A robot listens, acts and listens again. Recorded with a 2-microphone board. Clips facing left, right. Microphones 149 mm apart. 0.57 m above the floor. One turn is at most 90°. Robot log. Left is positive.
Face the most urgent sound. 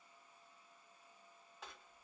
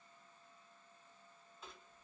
cmd idle
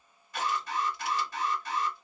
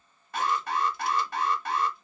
note: The alarm: about 60° right or 120° right.
cmd yaw -60
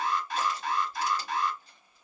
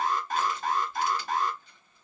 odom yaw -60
note: So it is at 50° right.
cmd yaw -50
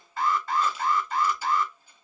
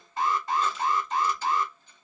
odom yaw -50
note: The alarm is now 20° right.
cmd yaw -20
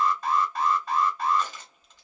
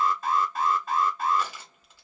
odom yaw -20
end: Found it: an alarm, straight ahead, under 1 m away.